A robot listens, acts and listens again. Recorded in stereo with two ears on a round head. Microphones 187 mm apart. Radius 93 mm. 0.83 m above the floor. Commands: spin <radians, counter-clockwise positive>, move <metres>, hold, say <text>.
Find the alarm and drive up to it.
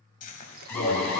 spin 0.52
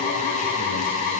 spin 2.36
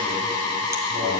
spin 0.26
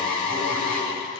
move 1.0
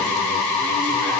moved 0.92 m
move 1.0
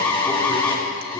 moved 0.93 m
spin 0.17
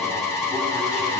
move 1.0
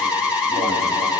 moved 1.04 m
move 1.0
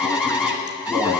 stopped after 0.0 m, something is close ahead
say I am next to the alarm.